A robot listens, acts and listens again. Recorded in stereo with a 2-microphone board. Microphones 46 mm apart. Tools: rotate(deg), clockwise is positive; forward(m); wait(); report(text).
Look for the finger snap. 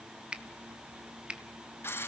rotate(20)
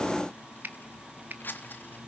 rotate(140)
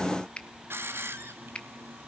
rotate(-25)
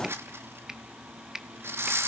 rotate(15)
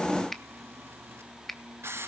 report("Found it: a finger snap, straight ahead, under 1 m away.")